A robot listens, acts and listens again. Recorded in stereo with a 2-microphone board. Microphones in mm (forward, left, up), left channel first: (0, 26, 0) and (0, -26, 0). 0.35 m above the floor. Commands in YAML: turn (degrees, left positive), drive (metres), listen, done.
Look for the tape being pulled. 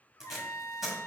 turn: -30
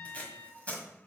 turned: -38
turn: 30
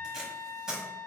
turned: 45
turn: -15
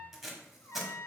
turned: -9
done: "Found it: tape being pulled, straight ahead."